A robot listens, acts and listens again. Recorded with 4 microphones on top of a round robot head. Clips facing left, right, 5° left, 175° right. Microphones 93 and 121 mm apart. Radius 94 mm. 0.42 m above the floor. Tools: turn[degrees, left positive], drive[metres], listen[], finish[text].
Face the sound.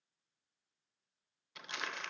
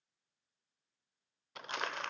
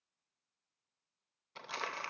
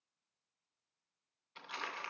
Thought: The crumpling: 45° right.
Action: turn[-45]
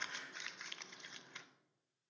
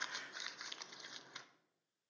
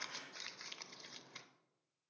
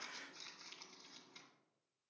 Thought: The crumpling is now 20° right.
Action: turn[-20]
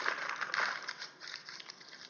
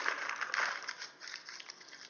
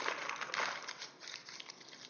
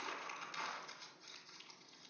Action: finish[Found it: crumpling, straight ahead, under 1 m away.]